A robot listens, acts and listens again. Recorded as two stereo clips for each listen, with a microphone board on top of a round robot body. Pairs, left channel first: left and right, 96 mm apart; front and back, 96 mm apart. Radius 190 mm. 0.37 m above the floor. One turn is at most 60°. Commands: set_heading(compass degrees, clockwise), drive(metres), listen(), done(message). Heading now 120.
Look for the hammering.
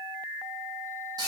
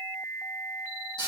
listen()
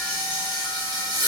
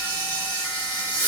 listen()
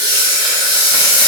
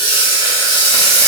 done("I can't make out hammering to turn to.")